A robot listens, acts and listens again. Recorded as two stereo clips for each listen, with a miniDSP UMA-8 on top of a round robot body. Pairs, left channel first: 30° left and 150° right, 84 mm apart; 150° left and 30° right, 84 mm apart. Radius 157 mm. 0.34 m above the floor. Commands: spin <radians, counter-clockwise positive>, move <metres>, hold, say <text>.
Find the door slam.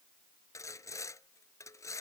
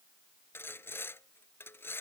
hold
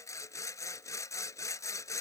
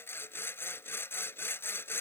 hold
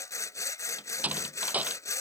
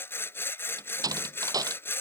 spin -1.40
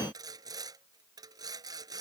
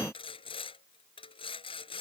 say Facing where the door slam came from. I can't hear it now.